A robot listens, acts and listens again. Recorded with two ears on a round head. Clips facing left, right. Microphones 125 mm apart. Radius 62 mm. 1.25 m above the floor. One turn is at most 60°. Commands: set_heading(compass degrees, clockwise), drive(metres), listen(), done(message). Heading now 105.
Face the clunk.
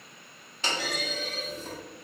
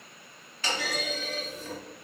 set_heading(85)
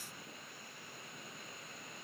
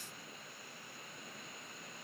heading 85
listen()
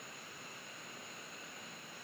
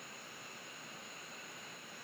done("I heard a clunk, but can't make it out now. It was about straight ahead or 140° left.")